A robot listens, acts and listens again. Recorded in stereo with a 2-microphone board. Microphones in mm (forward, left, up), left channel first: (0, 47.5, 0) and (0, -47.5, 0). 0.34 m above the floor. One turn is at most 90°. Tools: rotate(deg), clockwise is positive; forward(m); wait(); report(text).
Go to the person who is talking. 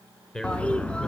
rotate(-30)
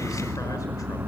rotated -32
wait()
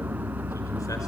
wait()
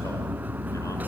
report("I heard a man speaking, but can't make it out now. It was about 20° right or 140° left. I did not reach it.")